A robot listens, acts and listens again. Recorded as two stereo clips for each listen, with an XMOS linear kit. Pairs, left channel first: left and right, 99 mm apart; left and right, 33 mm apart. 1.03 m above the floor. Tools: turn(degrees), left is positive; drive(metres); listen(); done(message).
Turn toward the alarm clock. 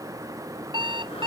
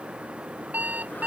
turn(degrees=-55)
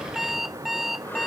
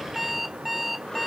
done("Found it: an alarm clock, straight ahead.")